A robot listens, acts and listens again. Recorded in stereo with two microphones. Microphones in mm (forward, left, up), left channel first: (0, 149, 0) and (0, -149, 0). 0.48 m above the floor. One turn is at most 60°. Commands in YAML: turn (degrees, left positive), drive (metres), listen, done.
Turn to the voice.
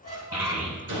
turn: -50
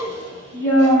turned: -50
turn: -60
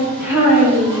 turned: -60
turn: -10
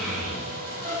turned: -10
done: "Facing the child speaking, over 4 m away."